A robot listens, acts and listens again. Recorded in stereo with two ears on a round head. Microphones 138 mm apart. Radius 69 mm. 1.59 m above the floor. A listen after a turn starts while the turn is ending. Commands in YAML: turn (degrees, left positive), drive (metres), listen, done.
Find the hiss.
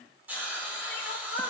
turn: -30
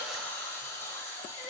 turn: 20
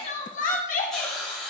done: "Facing the hiss, 2 to 4 m away."